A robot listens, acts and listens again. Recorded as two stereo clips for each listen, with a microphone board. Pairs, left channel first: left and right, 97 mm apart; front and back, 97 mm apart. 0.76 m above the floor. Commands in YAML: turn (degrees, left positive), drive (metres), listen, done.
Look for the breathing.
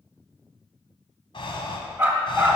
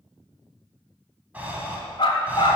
turn: 110
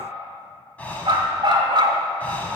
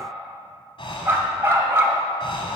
turn: 15
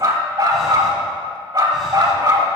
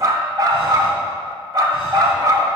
listen: true
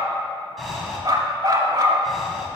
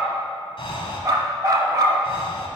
done: "Found it: breathing, straight ahead."